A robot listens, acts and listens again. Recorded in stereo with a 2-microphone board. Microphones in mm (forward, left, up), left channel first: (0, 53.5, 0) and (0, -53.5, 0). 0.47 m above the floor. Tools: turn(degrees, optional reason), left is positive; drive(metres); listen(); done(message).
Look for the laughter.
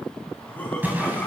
turn(degrees=30)
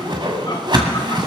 listen()
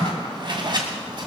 listen()
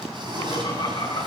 turn(degrees=135, reason="So it is at 135° left.")
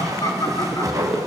turn(degrees=40, reason="The laughter is now 40° left.")
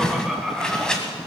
done("Facing the laughter.")